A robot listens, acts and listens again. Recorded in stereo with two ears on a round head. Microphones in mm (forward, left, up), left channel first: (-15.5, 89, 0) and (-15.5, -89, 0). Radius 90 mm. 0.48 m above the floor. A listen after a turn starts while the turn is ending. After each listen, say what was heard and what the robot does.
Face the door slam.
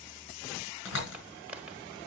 The door slam: about 70° left or 110° left. Turn 70° left.
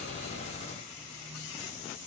Keep listening.
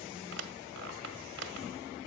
I heard a door slam, but can't make it out now. It was about straight ahead or 40° left.